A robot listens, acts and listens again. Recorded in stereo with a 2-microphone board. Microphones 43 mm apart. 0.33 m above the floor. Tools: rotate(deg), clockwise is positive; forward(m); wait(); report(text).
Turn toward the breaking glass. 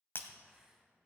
rotate(-60)
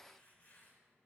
wait()
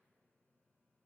report("I heard breaking glass, but can't make it out now. It was about straight ahead or 60° left.")